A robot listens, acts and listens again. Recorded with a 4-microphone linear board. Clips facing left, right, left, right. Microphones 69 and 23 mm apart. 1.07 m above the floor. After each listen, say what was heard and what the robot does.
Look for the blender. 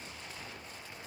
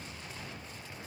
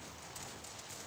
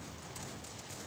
Keep listening.
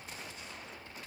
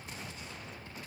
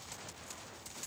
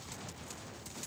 Keep listening.
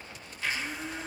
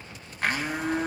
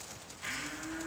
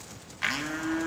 The blender: about 55° right or 125° right. Turn 55° right.
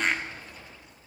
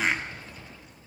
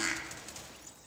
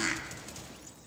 Facing the blender.